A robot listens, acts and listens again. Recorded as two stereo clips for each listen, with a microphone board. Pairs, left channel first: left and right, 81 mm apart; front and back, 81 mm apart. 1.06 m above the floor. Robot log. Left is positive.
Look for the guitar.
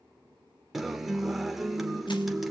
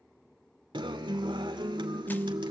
note: The guitar: straight behind.
cmd yaw +180
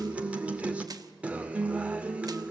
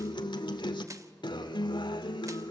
note: The guitar is now 15° right.
cmd yaw -15
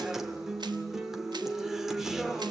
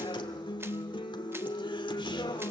end: Found it: a guitar, straight ahead, 1 to 2 m away.